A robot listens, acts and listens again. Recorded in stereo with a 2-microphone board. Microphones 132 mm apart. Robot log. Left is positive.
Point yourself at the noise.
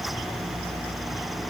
cmd idle
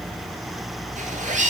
note: The zipper: about 75° right or 105° right.
cmd yaw -75
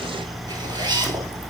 note: So it is at 35° right.
cmd yaw -35
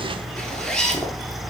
end: Found it: a zipper, straight ahead.